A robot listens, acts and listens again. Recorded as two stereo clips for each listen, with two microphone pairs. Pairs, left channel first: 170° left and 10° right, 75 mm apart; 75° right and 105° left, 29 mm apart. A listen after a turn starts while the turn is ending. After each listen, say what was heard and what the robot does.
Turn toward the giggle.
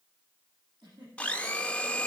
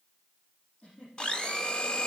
The giggle: 25° right. Turn 25° right.
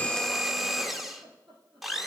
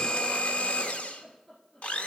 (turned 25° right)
Found it: a giggle, straight ahead, over 4 m away.